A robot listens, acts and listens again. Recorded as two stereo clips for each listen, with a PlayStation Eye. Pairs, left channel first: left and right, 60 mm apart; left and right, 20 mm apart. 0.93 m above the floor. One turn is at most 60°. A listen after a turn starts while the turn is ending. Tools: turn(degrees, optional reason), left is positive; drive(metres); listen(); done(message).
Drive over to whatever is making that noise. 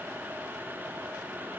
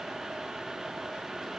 listen()
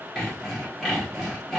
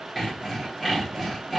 turn(degrees=30)
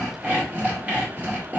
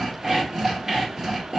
turn(degrees=-25, reason="So it is at 25° right.")
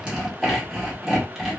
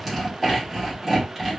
drive(metres=1.0)
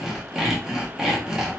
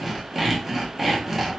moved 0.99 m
turn(degrees=-10, reason="The sawing is now 10° right.")
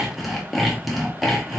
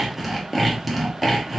drive(metres=1.0)
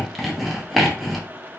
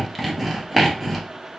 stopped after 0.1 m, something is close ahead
done("Arrived at the sawing, straight ahead.")